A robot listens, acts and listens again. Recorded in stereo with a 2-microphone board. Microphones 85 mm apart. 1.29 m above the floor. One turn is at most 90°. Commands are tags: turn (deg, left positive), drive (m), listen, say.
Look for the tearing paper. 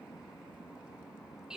<listen/>
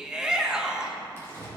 <turn deg="30"/>
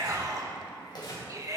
<turn deg="90"/>
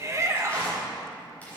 <turn deg="20"/>
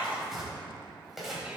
<say>Found it: tearing paper, straight ahead, over 4 m away.</say>